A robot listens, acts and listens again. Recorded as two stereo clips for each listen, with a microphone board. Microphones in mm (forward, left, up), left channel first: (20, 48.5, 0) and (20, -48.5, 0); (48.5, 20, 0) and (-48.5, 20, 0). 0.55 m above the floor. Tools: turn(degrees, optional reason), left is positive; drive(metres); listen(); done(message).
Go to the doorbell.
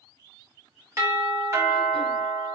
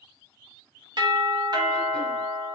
turn(degrees=-145, reason="The doorbell: 145° right.")
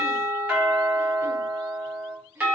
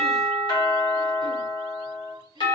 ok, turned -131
turn(degrees=-15, reason="The doorbell is now 15° right.")
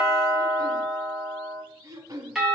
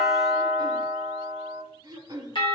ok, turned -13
drive(metres=1.0)
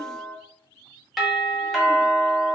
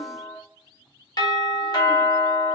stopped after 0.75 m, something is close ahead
done("I am next to the doorbell.")